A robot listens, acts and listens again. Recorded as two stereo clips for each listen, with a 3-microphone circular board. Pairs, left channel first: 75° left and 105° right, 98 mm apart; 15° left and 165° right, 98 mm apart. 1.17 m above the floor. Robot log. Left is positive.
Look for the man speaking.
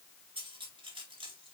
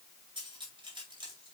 cmd idle
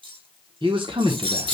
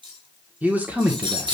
note: The man speaking: 95° right.
cmd yaw -95
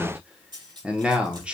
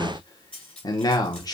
note: The man speaking is now 25° right.
cmd yaw -25
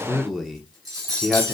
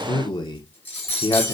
note: The man speaking is now 15° right.
cmd yaw -15
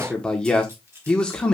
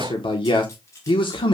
end: Facing the man speaking.